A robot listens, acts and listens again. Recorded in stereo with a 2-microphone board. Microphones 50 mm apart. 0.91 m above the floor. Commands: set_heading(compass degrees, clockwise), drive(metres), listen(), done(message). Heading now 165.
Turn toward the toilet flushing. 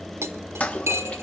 set_heading(135)
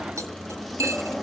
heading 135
done("Facing the toilet flushing, 1 to 2 m away.")